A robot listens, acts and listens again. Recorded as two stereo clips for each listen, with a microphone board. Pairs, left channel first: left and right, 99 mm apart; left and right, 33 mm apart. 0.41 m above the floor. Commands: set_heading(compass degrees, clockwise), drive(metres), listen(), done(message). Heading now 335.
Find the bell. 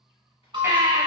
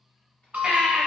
set_heading(30)
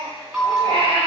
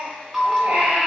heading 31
set_heading(41)
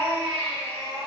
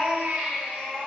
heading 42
listen()
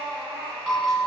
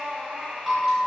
done("Facing the bell.")